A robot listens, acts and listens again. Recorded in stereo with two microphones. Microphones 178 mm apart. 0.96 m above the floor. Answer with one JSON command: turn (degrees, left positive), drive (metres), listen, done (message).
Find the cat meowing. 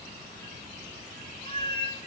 {"turn": 30}
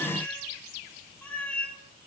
{"turn": 10}
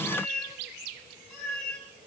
{"done": "Facing the cat meowing, over 4 m away."}